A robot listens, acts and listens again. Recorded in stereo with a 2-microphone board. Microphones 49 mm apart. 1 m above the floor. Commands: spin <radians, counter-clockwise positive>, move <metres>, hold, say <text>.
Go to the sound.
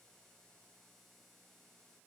hold
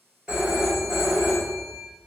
spin -0.35
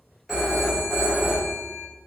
move 1.0
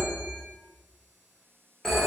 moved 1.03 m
move 1.0
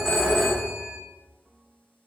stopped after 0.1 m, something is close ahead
say I am next to the phone ringing.